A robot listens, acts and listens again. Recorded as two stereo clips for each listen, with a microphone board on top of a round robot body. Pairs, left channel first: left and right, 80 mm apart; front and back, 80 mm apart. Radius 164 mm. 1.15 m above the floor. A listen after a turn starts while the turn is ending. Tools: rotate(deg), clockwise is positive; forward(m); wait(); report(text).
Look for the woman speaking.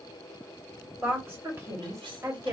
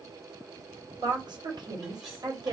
rotate(140)
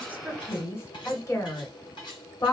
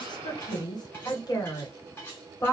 rotate(-50)
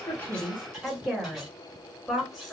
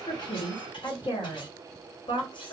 report("Found it: a woman speaking, straight ahead.")